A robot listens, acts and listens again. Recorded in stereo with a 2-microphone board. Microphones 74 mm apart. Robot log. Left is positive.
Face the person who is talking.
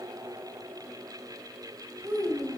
note: The child speaking: about 60° right or 120° right.
cmd yaw -60
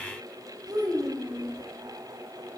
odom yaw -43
note: So it is at 75° right.
cmd yaw -75
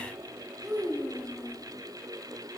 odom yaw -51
note: The child speaking is now 25° right.
cmd yaw -25
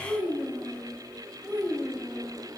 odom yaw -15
note: The child speaking is now 10° right.
cmd yaw -10
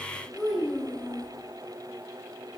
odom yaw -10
end: Found it: a child speaking, straight ahead, over 4 m away.